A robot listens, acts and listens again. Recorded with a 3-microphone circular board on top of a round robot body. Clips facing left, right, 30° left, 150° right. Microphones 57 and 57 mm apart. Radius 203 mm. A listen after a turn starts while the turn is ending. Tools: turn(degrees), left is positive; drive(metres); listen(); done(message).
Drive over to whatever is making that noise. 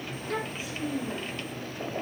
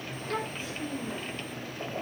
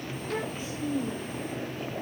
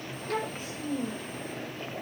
turn(degrees=170)
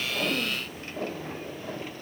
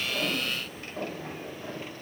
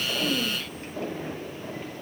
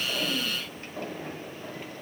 listen()
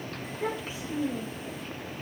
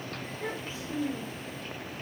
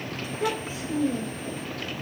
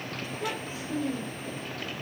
turn(degrees=10)
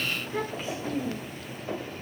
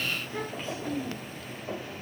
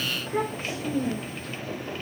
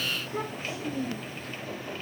drive(metres=1.0)
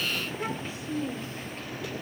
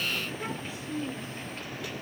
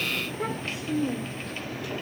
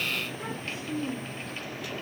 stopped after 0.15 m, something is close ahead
done("Blocked. The child speaking is further on, straight ahead.")